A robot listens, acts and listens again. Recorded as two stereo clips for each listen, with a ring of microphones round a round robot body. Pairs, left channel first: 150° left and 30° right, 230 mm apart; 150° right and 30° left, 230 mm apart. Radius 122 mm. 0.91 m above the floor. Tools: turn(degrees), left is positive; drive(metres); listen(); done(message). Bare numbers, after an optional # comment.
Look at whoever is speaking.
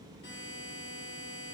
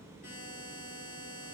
listen()
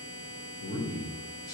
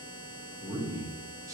# The man speaking: 105° left.
turn(105)
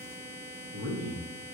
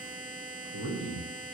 done("Found it: a man speaking, straight ahead.")